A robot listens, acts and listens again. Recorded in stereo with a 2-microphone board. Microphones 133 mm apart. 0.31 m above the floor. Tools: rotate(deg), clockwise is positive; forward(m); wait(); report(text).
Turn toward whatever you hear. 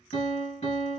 rotate(-50)
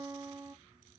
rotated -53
report("Facing the piano, 1 to 2 m away.")